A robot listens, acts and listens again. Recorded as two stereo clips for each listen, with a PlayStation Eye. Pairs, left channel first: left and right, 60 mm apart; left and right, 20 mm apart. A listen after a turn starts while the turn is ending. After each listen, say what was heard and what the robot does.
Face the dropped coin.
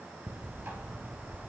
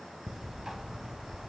Keep listening.
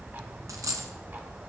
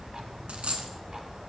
Turn 90° right.
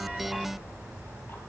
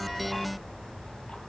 I heard a dropped coin from this way, but can't make it out now.